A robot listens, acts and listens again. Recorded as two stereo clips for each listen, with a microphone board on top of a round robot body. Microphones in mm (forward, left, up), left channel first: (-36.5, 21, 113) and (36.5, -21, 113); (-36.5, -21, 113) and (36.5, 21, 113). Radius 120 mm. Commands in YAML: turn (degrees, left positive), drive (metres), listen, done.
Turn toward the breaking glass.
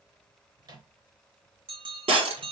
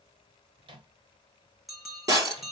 turn: -25
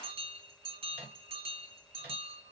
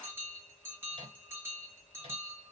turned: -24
done: "I heard breaking glass from this way, but can't make it out now."